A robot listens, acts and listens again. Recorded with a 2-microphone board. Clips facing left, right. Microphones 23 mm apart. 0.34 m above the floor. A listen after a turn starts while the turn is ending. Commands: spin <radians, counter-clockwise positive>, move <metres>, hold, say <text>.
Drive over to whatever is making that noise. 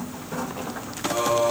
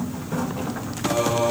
spin -1.05
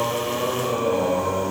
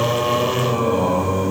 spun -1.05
spin -0.79
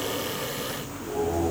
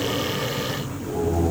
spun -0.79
spin 0.17
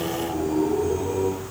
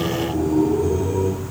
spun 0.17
move 1.0
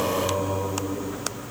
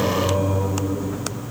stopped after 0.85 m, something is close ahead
say Arrived at the singing, straight ahead.